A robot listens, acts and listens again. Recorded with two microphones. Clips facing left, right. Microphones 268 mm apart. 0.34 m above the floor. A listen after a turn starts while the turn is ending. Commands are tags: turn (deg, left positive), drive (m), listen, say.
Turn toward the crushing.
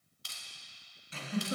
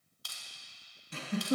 <turn deg="30"/>
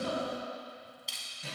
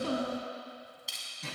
<say>Facing the crushing.</say>